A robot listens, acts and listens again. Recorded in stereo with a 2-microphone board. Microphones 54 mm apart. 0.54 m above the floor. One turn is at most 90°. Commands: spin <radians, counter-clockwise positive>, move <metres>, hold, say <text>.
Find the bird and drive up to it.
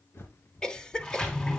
spin 0.96
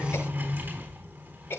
hold
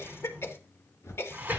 spin 1.22
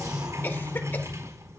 hold
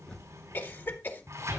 spin 0.35
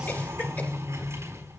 hold
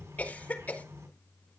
hold
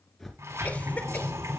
move 1.0
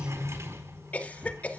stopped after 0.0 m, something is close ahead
hold
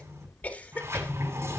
say Blocked. The bird is further on, straight ahead.